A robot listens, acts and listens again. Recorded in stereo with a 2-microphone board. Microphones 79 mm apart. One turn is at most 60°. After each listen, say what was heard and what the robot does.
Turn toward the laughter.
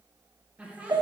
The laughter: about 15° right or 165° right. Turn 15° right.
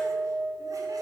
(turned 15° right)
Keep listening.
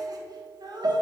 So it is at 120° right. Turn 60° right.
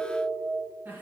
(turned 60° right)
The laughter is now 20° right. Turn 20° right.
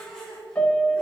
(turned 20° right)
The laughter is now 10° left. Turn 10° left.
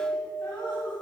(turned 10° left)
The laughter is now 15° left. Turn 15° left.
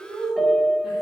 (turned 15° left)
Found it: laughter, straight ahead, 1 to 2 m away.